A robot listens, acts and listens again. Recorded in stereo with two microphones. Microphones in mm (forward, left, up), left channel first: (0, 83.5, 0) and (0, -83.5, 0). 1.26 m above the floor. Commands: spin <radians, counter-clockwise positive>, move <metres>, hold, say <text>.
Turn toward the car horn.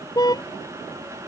spin 0.35
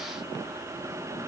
hold
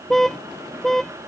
say Found it: a car horn, straight ahead.